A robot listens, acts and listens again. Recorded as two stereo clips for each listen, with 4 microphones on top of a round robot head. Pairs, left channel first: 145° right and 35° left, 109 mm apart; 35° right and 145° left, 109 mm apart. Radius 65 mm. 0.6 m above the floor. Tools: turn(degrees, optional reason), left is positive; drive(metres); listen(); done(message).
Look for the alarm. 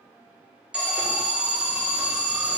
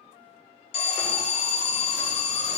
turn(degrees=-45, reason="The alarm: 45° right.")
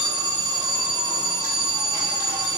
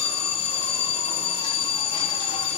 turn(degrees=-15, reason="The alarm is now 15° right.")
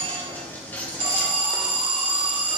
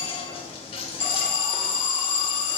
done("Found it: an alarm, straight ahead.")